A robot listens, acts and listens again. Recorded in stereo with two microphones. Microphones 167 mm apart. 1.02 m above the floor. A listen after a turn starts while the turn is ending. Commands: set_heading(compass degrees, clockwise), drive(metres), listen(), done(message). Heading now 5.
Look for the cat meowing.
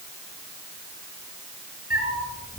set_heading(295)
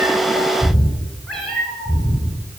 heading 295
done("Found it: a cat meowing, straight ahead, 2 to 4 m away.")